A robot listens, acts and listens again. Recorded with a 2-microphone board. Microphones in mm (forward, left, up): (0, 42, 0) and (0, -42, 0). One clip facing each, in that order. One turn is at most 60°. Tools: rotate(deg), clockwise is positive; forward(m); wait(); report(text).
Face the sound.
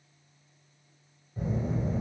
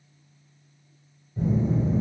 rotate(-30)
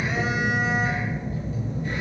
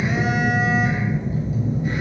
rotate(15)
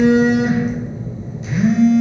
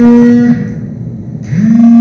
report("Found it: a phone buzzing, straight ahead, 1 to 2 m away.")